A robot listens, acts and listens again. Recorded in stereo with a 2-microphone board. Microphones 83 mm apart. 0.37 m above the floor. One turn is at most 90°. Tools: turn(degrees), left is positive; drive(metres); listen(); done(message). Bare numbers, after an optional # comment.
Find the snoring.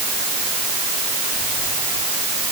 listen()
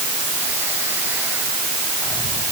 listen()
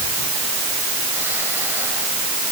done("I can't make out snoring.")